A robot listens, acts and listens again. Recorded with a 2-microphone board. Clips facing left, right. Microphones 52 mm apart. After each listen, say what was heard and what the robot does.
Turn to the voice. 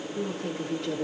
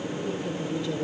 Turn 90° left.
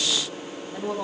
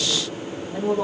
Found it: a woman speaking, straight ahead.